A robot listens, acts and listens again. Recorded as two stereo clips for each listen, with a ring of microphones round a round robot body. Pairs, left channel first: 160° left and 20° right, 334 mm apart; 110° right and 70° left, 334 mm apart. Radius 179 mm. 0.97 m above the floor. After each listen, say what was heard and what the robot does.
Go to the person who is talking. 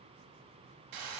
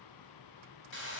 Keep listening.
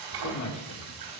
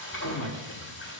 The man speaking: 160° right. Turn 160° right.
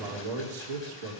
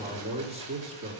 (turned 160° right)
Drive 1.0 m forward.
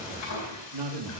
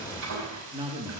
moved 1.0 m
The man speaking is now 10° right. Turn 10° right.
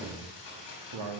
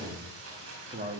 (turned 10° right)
Drive 1.0 m forward.
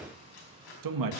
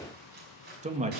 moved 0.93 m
Drive 1.0 m forward.
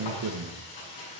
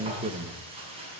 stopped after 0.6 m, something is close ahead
Arrived at the man speaking, straight ahead.